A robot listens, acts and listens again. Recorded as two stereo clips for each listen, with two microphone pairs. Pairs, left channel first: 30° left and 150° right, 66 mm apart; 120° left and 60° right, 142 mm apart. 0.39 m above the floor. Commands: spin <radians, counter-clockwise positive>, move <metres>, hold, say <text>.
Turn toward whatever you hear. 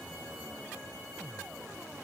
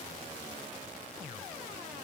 hold
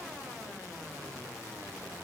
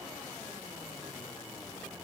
hold
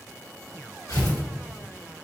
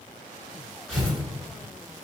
spin 0.61
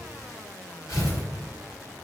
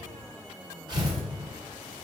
say Facing the tearing paper.